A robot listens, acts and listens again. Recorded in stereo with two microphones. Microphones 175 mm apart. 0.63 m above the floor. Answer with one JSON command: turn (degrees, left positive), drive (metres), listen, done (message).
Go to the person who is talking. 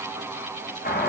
{"listen": true}
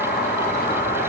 {"listen": true}
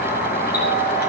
{"done": "I can't make out anyone speaking, only a doorbell."}